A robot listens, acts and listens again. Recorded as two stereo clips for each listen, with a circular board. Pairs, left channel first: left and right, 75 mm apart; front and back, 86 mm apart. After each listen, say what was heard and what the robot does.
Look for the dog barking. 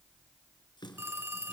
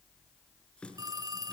Keep listening.
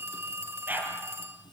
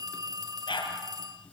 The dog barking: 25° right. Turn 25° right.
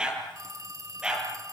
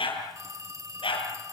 The dog barking is now 10° right. Turn 10° right.
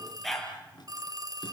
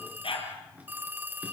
Facing the dog barking, over 4 m away.